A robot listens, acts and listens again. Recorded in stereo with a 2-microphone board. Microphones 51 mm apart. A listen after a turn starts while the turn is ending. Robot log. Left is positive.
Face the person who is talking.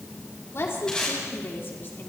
note: The woman speaking: about 45° left or 135° left.
cmd yaw +45
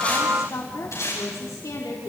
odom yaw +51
note: So it is at 80° left.
cmd yaw +80
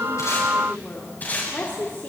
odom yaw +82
note: The woman speaking is now 35° left.
cmd yaw +35
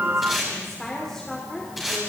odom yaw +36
end: Found it: a woman speaking, straight ahead, 2 to 4 m away.